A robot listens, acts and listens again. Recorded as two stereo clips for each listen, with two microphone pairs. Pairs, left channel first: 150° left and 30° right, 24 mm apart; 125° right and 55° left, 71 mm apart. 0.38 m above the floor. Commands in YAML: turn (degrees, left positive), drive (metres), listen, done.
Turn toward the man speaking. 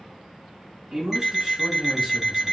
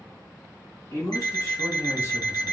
turn: -80
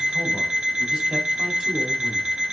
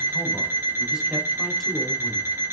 listen: true
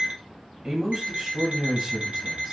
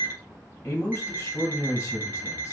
turn: -70
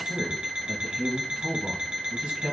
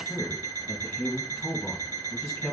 turn: -45
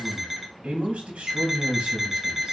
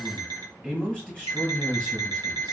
turn: -15
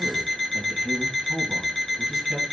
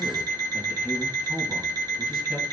done: "Found it: a man speaking, straight ahead."